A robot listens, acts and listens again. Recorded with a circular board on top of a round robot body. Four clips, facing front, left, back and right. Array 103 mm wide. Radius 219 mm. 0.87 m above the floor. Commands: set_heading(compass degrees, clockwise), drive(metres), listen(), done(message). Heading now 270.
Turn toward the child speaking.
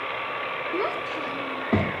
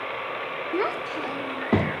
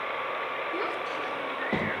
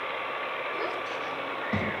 set_heading(175)
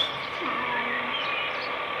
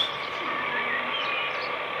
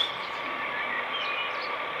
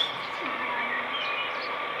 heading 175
listen()
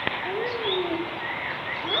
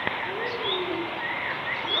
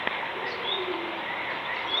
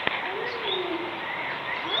done("Found it: a child speaking, straight ahead.")